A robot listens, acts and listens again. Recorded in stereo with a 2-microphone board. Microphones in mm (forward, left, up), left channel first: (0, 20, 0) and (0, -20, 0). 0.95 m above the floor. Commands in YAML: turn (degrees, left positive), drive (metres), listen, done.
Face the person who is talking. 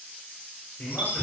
turn: 60
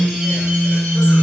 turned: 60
listen: true
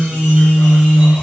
listen: true
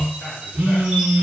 done: "I heard a man speaking, but can't make it out now. It was about straight ahead or 60° left."